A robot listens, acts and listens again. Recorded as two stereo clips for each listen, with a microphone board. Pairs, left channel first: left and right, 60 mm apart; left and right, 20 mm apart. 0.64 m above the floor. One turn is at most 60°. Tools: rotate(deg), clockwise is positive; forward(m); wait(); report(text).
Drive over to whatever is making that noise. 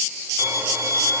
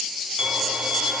rotate(50)
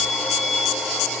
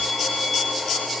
forward(1.0)
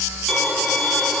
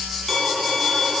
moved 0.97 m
forward(1.0)
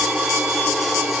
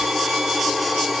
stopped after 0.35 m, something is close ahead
report("Arrived at the violin, straight ahead.")